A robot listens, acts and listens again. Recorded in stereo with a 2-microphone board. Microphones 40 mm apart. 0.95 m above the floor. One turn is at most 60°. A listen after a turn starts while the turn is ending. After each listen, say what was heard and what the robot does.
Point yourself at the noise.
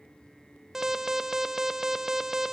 Turn 30° right.
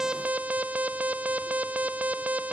So it is at 140° right. Turn 60° right.
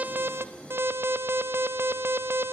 The alarm is now 80° right. Turn 60° right.
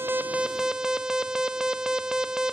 The alarm is now 15° right. Turn 15° right.
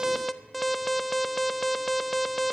Found it: an alarm, straight ahead.